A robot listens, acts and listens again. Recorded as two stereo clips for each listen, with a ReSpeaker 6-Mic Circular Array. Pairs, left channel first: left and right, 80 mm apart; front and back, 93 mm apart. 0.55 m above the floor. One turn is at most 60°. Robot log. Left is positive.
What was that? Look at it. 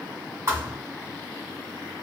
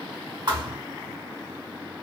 note: The thud: 145° right.
cmd yaw -60
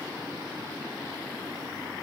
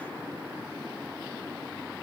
note: Nothing new. It was at 85° right.
cmd yaw -60
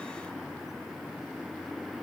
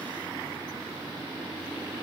note: Nothing new. It was at 25° right.
cmd yaw -25
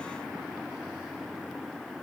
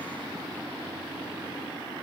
end: Facing where the thud came from. I can't hear it now.